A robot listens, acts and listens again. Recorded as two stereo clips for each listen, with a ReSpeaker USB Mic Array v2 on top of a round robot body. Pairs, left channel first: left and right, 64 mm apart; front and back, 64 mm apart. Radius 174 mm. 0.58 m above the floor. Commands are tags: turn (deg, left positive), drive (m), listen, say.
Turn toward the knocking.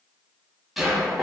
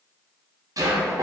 <turn deg="180"/>
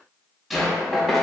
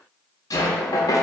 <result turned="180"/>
<say>Found it: knocking, straight ahead.</say>